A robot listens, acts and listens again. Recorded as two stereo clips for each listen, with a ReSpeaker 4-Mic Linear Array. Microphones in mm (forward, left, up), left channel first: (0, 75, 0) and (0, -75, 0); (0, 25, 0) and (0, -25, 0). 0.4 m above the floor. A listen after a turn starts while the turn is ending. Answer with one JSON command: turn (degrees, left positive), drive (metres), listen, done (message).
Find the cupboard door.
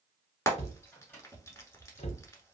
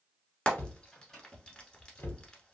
{"turn": 45}
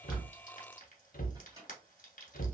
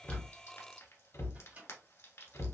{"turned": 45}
{"turn": 85}
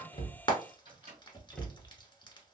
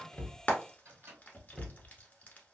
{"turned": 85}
{"done": "Found it: a cupboard door, straight ahead, under 1 m away."}